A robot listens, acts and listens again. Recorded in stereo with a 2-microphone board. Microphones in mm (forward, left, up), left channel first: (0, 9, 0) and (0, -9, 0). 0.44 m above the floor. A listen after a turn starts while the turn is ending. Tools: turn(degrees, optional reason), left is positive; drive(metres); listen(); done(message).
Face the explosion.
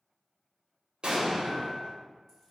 turn(degrees=-60, reason="The explosion: about 60° right or 120° right.")
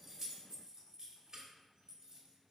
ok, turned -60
listen()
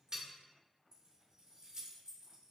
done("I heard an explosion, but can't make it out now. It was about straight ahead or 60° right.")